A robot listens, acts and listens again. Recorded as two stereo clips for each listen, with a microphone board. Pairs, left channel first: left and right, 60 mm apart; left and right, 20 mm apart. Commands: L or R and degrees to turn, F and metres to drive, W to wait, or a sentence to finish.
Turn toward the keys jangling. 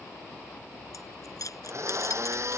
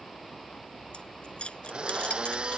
L70
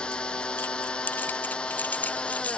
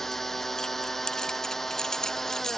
L30
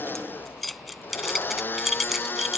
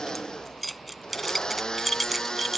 Facing the keys jangling.